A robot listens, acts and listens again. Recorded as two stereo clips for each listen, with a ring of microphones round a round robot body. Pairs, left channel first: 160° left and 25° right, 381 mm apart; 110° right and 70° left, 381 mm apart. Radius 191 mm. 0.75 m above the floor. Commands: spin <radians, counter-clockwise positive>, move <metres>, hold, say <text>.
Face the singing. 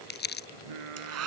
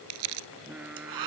spin -0.35
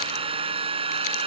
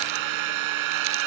hold
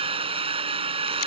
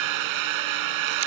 hold
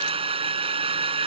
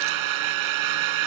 say I heard singing from this way, but can't make it out now.